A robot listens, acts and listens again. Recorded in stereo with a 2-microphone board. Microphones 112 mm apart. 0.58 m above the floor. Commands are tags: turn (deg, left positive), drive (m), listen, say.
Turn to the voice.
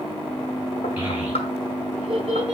<turn deg="-30"/>
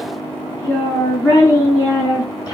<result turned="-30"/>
<turn deg="35"/>
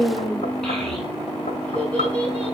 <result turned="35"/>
<turn deg="10"/>
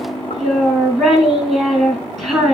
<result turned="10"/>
<say>Facing the child speaking.</say>